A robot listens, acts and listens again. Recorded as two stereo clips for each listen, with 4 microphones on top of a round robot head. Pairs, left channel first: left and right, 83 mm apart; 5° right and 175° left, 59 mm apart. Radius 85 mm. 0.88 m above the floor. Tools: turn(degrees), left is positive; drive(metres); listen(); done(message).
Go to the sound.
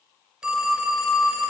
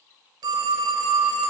turn(degrees=-170)
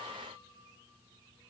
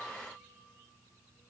listen()
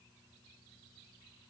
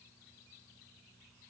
listen()
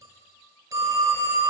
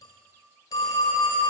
turn(degrees=-35)
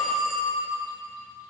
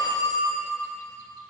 drive(metres=1.0)
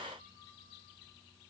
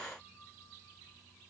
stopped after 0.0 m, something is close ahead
listen()
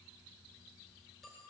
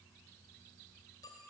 listen()
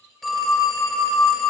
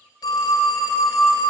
done("Something is in my way. I am facing the phone ringing but have not reached it.")